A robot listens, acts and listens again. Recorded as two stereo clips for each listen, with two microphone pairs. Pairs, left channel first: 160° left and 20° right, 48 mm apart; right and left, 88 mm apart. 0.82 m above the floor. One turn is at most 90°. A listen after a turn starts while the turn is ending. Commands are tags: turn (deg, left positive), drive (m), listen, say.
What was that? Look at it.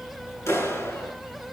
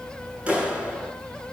<turn deg="90"/>
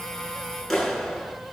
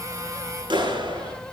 <turn deg="75"/>
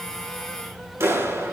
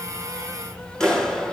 <turn deg="-10"/>
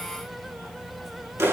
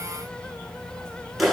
<say>Facing the clap.</say>